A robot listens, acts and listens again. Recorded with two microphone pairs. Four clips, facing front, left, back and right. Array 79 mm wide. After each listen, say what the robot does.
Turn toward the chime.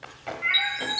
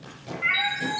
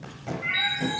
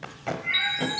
Turn 35° right.
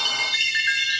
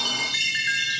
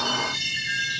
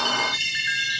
Facing the chime, 1 to 2 m away.